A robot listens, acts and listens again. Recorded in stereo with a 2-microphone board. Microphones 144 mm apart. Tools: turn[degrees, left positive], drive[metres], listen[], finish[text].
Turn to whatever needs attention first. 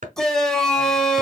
Action: turn[30]
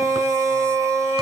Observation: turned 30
Thought: So it is at 25° right.
Action: turn[-25]
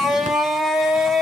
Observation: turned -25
Action: finish[Facing the shout.]